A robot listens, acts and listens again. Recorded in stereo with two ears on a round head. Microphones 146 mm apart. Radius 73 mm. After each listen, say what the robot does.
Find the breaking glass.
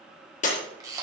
Turn 50° left.
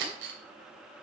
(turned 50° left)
Keep listening.
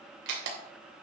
I heard breaking glass, but can't make it out now. It was about straight ahead or 80° left.